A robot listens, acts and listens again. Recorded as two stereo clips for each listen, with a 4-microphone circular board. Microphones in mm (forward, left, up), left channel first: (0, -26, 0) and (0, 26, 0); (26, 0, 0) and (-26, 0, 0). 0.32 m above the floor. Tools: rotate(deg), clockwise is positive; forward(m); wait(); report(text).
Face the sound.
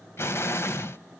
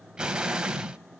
rotate(110)
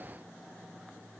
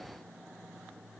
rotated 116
report("Facing where the explosion came from. I can't hear it now.")